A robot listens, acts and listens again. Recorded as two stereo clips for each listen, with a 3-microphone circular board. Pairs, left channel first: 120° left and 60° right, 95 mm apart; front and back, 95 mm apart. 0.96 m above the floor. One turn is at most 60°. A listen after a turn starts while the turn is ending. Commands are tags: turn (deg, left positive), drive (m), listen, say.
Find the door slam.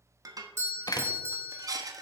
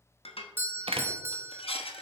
<turn deg="60"/>
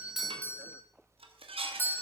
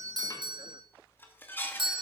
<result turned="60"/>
<turn deg="60"/>
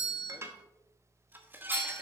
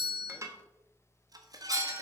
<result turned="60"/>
<turn deg="45"/>
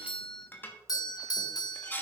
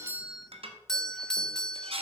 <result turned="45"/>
<say>I heard a door slam from this way, but can't make it out now.</say>